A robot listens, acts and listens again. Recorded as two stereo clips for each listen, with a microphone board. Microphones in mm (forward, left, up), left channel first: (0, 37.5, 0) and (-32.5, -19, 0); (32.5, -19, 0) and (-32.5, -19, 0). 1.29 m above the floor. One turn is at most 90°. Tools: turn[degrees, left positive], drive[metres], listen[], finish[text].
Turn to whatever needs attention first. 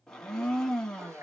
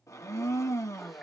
Action: listen[]
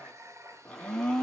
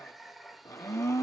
Action: listen[]
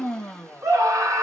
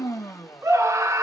Thought: The scream: 150° right.
Action: turn[-90]
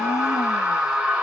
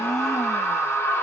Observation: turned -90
Thought: The scream is now 50° right.
Action: turn[-50]
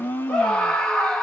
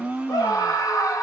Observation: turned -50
Thought: The scream is now 20° right.
Action: turn[-20]
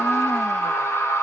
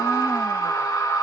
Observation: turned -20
Action: finish[Found it: a scream, straight ahead.]